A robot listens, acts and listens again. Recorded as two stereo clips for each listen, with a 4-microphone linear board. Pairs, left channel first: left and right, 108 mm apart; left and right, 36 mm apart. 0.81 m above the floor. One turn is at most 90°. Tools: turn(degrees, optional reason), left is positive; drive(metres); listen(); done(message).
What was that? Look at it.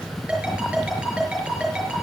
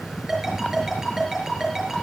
turn(degrees=-30)
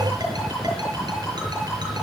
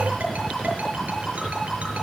listen()
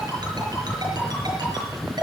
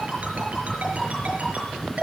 listen()
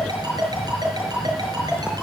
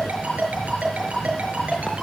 turn(degrees=-90, reason="So it is at 140° right.")
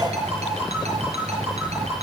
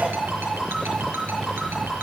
turn(degrees=-85, reason="The ringtone is now 85° right.")
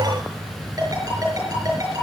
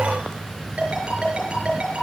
turn(degrees=-35, reason="The ringtone is now 35° right.")
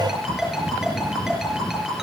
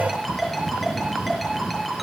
done("Facing the ringtone, over 4 m away.")